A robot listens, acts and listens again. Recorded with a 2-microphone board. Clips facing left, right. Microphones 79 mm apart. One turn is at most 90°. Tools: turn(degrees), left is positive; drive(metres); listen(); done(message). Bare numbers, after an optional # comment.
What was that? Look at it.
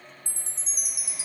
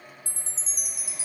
# The chime: about 65° left or 115° left.
turn(65)
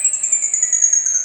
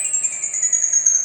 # So it is at 25° left.
turn(25)
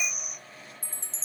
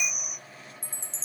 done("Facing the chime.")